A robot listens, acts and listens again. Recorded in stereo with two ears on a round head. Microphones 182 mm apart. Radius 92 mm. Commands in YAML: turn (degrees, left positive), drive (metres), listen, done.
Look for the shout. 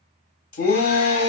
turn: 45
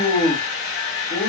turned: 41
turn: 10
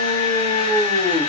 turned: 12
done: "Found it: a shout, straight ahead."